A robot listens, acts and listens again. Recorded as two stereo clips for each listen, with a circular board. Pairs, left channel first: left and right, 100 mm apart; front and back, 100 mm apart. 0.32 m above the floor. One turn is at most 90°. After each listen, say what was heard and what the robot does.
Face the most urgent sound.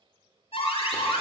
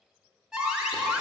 The alarm: 95° left. Turn 90° left.
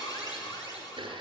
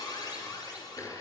The alarm is now 45° left. Turn 45° left.
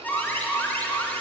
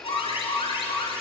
The alarm is now 15° left. Turn 15° left.
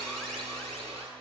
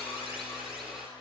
Facing the alarm, 2 to 4 m away.